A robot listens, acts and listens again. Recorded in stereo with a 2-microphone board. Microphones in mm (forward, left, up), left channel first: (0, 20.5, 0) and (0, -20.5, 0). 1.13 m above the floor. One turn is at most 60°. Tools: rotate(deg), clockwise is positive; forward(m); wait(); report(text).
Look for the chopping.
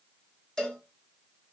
wait()
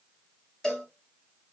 wait()
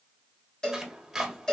rotate(30)
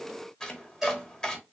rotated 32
rotate(-20)
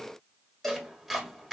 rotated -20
report("Facing the chopping, 1 to 2 m away.")